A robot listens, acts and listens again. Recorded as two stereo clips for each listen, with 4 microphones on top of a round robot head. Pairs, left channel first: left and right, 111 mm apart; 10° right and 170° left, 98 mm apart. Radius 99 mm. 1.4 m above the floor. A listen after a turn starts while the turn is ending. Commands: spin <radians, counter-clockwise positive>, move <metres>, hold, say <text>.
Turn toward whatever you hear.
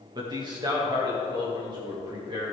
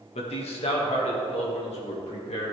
spin -0.61
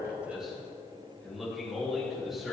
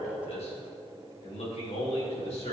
say Facing the man speaking, 2 to 4 m away.